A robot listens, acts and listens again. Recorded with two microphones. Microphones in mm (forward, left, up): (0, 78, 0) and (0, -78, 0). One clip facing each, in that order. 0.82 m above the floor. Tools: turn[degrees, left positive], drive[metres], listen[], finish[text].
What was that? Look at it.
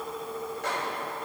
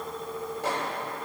Thought: The microwave: about 30° right or 150° right.
Action: turn[-30]
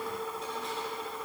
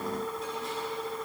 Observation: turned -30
Action: listen[]
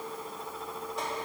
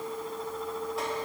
Action: listen[]
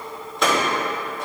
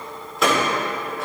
Action: finish[Found it: a microwave, straight ahead, 2 to 4 m away.]